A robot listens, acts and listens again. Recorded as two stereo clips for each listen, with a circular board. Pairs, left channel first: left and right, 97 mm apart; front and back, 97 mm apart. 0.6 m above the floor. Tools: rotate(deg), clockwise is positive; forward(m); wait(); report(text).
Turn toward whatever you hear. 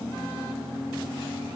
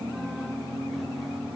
wait()
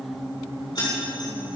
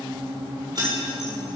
rotate(-135)
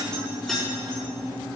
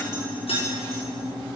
report("Found it: keys jangling, straight ahead, over 4 m away.")